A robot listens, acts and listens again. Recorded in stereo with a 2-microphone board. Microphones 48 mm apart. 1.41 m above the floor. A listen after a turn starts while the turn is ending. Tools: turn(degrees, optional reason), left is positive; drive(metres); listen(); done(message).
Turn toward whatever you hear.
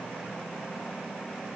listen()
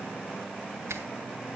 turn(degrees=-90)
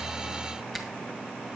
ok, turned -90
done("Found it: a finger snap, straight ahead.")